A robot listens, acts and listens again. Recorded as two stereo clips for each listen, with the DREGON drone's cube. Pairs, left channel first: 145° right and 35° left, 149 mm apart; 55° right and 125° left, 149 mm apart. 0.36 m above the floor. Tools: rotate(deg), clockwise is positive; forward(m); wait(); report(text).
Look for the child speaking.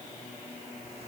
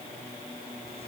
wait()
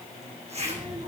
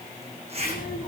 report("Found it: a child speaking, straight ahead.")